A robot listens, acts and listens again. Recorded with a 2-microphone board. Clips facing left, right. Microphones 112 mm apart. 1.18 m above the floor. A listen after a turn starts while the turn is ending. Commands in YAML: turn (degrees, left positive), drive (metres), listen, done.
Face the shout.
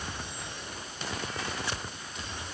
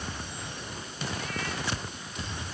listen: true
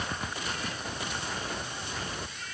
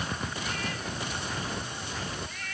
listen: true
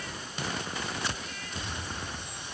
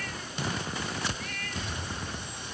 done: "I can't make out a shout to turn to."